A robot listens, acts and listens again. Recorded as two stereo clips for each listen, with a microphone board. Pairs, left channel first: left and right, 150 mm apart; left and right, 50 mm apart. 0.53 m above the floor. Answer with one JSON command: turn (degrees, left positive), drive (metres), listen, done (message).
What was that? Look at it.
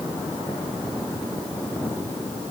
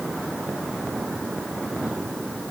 {"listen": true}
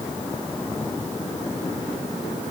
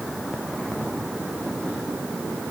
{"listen": true}
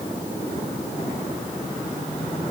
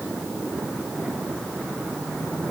{"done": "I can't make out anything."}